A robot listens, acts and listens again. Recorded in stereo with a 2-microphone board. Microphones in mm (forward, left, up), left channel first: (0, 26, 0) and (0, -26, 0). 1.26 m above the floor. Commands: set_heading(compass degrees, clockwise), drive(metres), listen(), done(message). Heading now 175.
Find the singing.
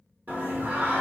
set_heading(210)
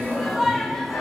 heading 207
done("Facing the singing.")